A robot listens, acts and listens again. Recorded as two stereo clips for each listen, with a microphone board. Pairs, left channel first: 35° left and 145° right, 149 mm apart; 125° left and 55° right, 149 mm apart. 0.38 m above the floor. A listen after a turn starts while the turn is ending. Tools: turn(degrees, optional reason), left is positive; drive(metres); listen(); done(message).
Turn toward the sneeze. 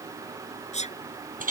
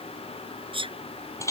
done("Found it: a sneeze, straight ahead.")